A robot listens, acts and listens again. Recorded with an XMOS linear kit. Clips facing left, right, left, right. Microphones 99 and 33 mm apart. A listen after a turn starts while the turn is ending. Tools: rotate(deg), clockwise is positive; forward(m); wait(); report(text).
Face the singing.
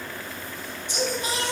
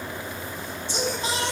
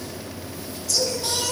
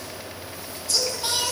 rotate(30)
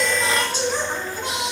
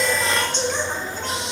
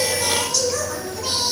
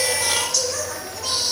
rotate(-15)
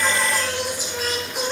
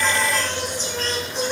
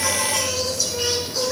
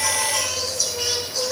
rotate(-10)
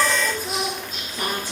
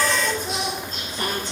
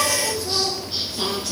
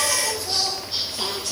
rotate(-10)
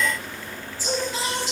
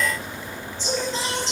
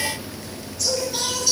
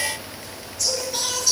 report("Found it: singing, straight ahead, 2 to 4 m away.")